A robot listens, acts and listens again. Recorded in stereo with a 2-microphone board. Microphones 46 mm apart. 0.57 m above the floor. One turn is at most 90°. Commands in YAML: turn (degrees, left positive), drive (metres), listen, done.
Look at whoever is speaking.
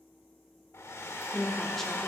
turn: 30
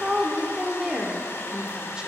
turn: -20
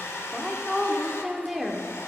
done: "Found it: a woman speaking, straight ahead, 1 to 2 m away."